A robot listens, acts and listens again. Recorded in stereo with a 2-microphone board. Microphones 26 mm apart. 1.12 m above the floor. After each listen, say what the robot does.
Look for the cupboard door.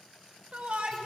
Keep listening.
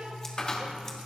Turn 30° left.
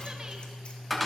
Facing the cupboard door.